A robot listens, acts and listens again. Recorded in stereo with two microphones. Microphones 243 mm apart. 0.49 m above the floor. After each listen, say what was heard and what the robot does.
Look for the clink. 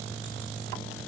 Keep listening.
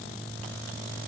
Keep listening.
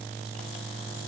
I can't make out a clink to turn to.